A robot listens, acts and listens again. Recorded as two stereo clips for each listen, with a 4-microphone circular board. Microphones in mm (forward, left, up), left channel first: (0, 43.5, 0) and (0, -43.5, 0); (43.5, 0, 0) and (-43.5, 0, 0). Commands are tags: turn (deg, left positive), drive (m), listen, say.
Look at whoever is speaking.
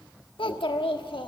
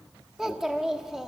<turn deg="95"/>
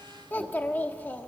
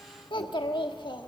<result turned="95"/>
<turn deg="25"/>
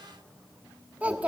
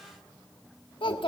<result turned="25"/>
<turn deg="-15"/>
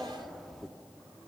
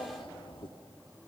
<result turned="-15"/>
<say>Found it: a child speaking, straight ahead.</say>